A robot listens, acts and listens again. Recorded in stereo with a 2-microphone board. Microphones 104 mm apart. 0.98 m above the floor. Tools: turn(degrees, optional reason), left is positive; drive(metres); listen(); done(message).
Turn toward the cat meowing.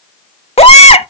listen()
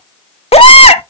listen()
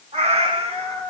turn(degrees=-90)
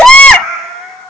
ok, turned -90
done("Found it: a cat meowing, straight ahead.")